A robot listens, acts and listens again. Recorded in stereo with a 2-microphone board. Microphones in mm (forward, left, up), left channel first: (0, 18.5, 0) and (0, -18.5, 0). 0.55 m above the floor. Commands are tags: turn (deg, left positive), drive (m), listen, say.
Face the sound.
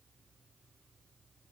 <listen/>
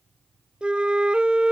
<turn deg="-30"/>
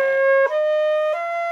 <say>Facing the flute.</say>